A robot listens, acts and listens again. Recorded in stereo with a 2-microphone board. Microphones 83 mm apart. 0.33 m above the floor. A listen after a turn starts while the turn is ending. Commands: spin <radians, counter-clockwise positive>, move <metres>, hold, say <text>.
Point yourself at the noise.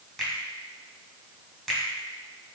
spin 0.52
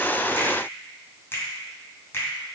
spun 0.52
spin 2.62
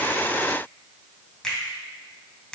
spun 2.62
spin 0.17
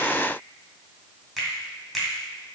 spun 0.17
say Found it: a finger snap, straight ahead.